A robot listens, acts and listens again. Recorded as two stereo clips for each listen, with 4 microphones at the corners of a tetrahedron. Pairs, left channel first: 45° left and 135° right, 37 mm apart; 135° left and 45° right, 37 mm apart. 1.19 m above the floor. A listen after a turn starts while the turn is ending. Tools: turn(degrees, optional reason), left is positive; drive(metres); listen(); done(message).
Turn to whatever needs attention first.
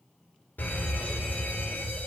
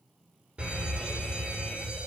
turn(degrees=15, reason="The fire alarm: 15° left.")
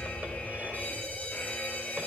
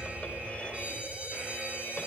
done("Facing the fire alarm.")